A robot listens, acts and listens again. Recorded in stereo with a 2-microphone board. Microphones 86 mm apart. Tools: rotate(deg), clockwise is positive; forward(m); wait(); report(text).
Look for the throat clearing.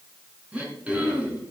rotate(15)
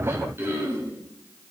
rotate(150)
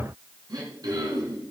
rotate(50)
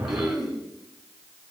report("Facing the throat clearing.")